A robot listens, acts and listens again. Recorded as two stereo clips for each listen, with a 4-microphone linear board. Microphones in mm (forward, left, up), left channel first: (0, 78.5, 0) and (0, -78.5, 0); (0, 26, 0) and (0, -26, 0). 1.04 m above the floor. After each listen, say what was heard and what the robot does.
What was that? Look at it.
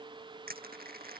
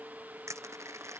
The crushing: about 70° right or 110° right. Turn 70° right.
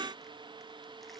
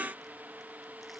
Keep listening.
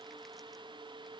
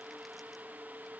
Keep listening.
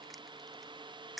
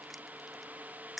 Facing the crushing.